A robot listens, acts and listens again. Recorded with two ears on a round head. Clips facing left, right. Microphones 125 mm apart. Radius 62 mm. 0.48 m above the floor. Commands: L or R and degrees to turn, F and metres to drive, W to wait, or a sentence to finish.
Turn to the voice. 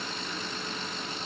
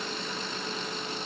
W
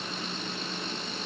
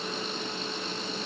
W
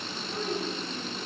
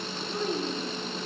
R30
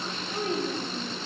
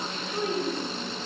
L25
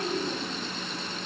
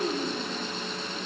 Found it: a child speaking, straight ahead.